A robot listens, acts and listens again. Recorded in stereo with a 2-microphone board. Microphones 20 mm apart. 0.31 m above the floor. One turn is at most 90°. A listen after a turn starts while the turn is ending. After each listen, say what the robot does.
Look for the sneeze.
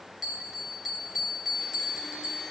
Keep listening.
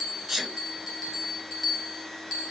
Turn 30° left.
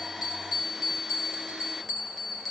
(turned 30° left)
Keep listening.
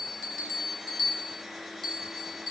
I heard a sneeze, but can't make it out now. It was about 25° right or 145° left.